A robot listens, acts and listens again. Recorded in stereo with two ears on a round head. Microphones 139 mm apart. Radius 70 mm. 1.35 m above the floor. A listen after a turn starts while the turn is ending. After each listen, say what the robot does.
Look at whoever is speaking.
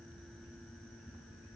Keep listening.
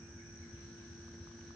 Keep listening.
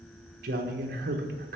Turn 65° right.
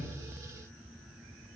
Keep listening.
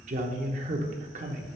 Turn 50° right.
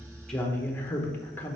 Turn 15° left.
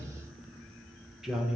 Facing the man speaking.